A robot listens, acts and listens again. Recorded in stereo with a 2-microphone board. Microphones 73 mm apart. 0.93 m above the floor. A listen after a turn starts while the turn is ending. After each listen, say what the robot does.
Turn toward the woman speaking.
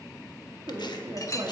Turn 70° right.
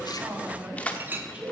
Turn 15° right.
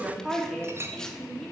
Facing the woman speaking.